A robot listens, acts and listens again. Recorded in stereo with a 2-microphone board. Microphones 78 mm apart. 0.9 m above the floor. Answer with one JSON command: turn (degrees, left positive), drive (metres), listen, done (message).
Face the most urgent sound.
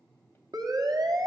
{"turn": -55}
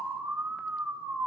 {"turn": -10}
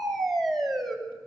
{"done": "Facing the siren, 2 to 4 m away."}